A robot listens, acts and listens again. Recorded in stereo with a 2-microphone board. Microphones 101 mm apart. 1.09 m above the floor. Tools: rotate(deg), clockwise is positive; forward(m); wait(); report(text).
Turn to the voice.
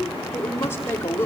rotate(-25)
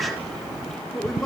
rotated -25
report("Found it: a woman speaking, straight ahead, 2 to 4 m away.")